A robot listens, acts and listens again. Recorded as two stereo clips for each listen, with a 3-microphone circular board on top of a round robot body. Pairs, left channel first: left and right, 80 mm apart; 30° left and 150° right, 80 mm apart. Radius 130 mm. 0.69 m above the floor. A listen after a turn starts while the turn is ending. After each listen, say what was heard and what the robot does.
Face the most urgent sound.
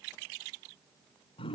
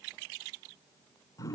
Keep listening.
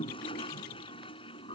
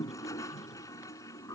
Keep listening.
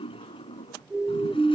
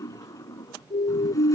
Found it: a siren, straight ahead.